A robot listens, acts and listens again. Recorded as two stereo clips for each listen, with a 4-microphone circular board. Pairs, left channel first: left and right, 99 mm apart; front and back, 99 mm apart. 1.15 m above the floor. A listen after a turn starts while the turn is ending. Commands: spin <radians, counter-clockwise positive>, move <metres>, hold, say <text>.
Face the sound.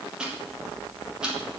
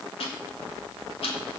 spin -0.17
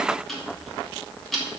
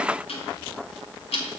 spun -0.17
say Found it: ticking, straight ahead, 2 to 4 m away.